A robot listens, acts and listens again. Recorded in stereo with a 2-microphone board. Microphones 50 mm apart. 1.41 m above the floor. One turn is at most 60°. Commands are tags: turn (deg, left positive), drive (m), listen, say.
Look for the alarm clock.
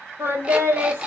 <turn deg="-20"/>
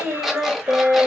<say>Facing the alarm clock, 1 to 2 m away.</say>